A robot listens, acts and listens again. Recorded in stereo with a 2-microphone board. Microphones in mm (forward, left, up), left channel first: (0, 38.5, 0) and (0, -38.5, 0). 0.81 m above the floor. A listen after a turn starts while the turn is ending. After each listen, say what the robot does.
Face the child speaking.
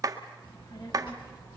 Turn 70° left.
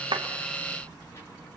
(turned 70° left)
Turn 30° left.
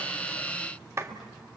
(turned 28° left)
Facing the child speaking, over 4 m away.